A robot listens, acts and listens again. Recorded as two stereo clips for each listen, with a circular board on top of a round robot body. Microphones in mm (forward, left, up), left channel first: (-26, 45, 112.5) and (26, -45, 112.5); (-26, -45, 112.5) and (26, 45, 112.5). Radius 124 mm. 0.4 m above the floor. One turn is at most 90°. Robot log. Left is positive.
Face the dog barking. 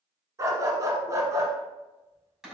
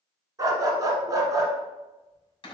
end: Found it: a dog barking, straight ahead.